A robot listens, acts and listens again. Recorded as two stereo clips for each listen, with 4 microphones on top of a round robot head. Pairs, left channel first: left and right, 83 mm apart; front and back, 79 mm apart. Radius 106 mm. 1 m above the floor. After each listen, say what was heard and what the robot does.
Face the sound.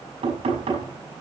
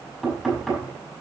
The knocking: 90° right. Turn 90° right.
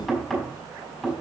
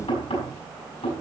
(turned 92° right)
Facing the knocking, over 4 m away.